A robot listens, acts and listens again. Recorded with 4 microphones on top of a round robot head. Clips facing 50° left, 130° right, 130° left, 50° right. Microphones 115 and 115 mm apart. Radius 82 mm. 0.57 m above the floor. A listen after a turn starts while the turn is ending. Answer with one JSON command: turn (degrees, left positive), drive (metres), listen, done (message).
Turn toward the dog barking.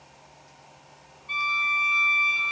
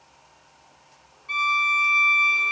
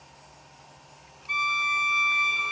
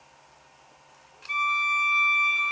{"listen": true}
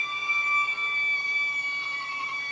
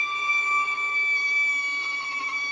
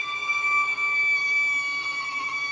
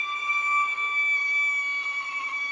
{"listen": true}
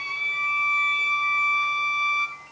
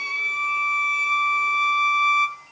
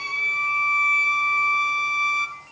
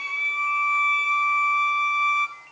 {"done": "I can't make out a dog barking to turn to."}